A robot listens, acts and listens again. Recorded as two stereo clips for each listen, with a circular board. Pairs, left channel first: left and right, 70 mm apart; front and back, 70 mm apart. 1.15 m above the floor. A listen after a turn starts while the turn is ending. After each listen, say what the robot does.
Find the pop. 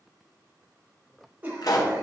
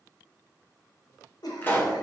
Turn 65° left.
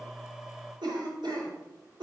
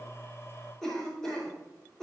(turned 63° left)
Facing where the pop came from. I can't hear it now.